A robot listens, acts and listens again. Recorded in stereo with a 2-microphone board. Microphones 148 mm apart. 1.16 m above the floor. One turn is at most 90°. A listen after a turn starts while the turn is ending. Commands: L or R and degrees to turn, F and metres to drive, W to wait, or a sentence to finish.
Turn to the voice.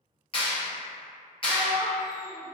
R30
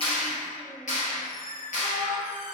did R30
L15
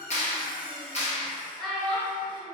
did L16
Facing the child speaking, under 1 m away.